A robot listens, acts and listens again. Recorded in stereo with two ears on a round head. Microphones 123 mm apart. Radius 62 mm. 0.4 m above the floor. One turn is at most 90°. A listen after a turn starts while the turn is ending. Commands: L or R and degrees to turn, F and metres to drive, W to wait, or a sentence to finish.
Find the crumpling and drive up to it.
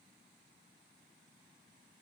W
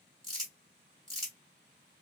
L30
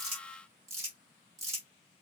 R30
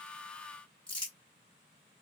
F1.0
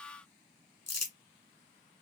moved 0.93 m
L15
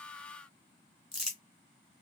F1.0
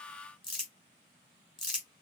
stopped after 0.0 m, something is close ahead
Arrived at the crumpling, straight ahead.